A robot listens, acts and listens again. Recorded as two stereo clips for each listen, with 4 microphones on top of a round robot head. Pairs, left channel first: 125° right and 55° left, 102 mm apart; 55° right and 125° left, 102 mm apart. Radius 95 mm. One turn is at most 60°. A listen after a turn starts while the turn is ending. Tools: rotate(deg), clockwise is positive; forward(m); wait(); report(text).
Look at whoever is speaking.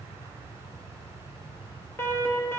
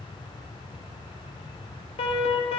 wait()
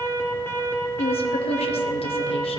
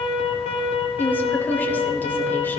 rotate(60)
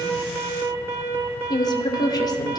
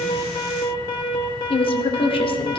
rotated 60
rotate(60)
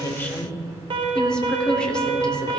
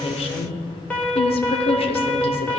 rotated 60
rotate(45)
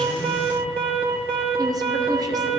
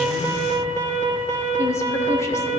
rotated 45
wait()
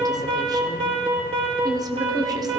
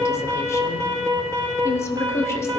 report("Found it: a woman speaking, straight ahead, 1 to 2 m away.")